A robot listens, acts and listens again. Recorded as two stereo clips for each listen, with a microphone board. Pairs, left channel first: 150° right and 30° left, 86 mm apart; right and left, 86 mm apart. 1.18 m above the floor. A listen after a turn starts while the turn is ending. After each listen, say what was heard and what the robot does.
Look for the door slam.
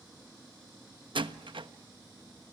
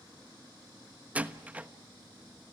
The door slam: 15° left. Turn 15° left.
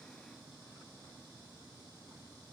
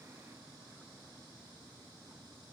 I heard a door slam from this way, but can't make it out now.